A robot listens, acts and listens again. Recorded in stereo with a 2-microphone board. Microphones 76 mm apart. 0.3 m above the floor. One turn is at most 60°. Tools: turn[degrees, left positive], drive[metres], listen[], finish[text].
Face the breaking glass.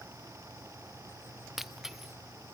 Action: turn[-30]
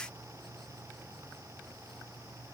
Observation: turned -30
Action: listen[]
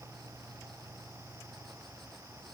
Action: finish[I heard breaking glass, but can't make it out now. It was about 25° left or 145° right.]